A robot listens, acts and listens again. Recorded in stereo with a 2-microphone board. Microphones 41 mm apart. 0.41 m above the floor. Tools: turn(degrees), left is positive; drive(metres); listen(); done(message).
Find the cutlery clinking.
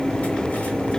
listen()
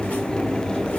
listen()
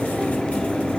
done("I can't make out cutlery clinking.")